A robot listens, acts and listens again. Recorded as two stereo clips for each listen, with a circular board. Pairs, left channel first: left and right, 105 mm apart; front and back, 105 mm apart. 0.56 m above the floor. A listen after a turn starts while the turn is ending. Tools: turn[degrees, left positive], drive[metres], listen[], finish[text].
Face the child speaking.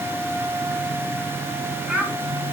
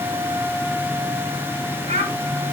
Thought: The child speaking: 170° right.
Action: turn[-170]
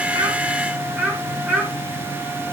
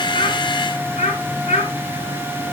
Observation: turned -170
Thought: The child speaking is now 15° right.
Action: turn[-15]
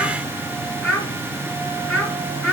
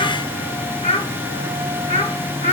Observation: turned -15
Action: finish[Facing the child speaking, over 4 m away.]